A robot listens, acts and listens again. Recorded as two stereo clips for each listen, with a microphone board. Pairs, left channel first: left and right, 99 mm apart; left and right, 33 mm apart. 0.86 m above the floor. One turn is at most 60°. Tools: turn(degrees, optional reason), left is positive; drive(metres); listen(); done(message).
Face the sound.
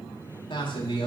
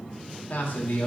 turn(degrees=55, reason="The man speaking: about 55° left or 125° left.")
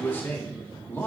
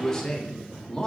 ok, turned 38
turn(degrees=20, reason="So it is at 20° left.")
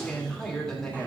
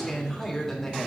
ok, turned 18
done("Found it: a man speaking, straight ahead, 1 to 2 m away.")